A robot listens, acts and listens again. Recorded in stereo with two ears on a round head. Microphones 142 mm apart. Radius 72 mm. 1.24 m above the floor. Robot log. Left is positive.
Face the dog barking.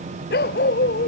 cmd yaw +90
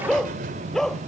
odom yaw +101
end: Found it: a dog barking, straight ahead.